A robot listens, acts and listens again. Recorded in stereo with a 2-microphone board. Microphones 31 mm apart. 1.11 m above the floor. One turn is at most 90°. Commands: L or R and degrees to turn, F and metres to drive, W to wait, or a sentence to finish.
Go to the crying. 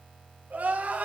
R65
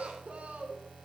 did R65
R55
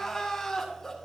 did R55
L15
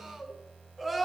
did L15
F1.0
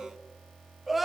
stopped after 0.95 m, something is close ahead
I am next to the crying.